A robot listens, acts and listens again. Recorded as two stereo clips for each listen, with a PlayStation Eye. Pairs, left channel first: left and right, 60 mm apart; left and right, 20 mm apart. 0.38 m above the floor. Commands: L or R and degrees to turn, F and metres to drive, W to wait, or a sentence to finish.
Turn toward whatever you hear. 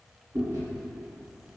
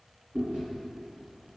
R70
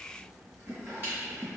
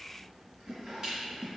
R40
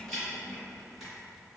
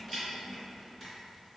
Found it: chewing, straight ahead, 2 to 4 m away.